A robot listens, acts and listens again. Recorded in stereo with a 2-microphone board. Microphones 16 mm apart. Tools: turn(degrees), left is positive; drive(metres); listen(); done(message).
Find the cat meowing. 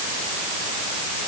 listen()
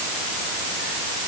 listen()
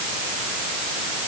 done("I can't make out a cat meowing.")